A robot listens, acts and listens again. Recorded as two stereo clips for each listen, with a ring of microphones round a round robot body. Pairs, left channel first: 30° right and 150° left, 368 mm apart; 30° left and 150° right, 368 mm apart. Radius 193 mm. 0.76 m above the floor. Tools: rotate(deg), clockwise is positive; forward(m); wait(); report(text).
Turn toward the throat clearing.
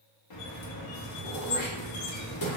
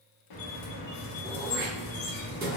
rotate(85)
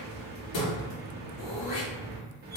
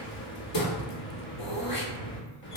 report("Facing the throat clearing, 1 to 2 m away.")